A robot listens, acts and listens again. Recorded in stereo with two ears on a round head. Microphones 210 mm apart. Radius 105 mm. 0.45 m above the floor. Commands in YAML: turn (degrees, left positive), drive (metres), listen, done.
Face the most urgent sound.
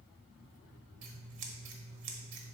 listen: true
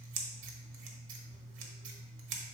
listen: true
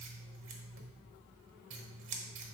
done: "I can't make out anything urgent, only scissors."